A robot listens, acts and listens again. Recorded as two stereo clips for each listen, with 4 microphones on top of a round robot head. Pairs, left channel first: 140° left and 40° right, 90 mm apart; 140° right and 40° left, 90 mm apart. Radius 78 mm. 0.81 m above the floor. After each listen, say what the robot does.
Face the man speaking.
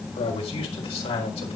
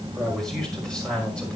Turn 140° left.
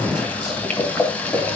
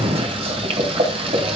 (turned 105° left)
Turn 35° left.
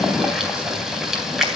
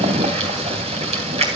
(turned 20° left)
Turn 15° left.
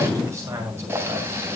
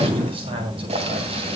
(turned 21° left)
Turn 20° left.
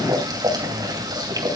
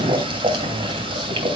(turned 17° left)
Keep listening.
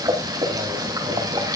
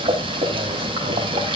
Keep listening.
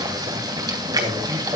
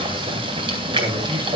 Facing the man speaking, over 4 m away.